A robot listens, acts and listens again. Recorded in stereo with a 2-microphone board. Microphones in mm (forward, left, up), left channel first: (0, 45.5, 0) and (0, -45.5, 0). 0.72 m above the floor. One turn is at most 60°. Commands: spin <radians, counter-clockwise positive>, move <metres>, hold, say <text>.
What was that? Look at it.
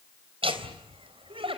spin -1.05
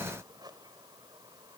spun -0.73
spin -0.87
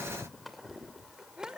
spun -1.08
say Found it: laughter, straight ahead.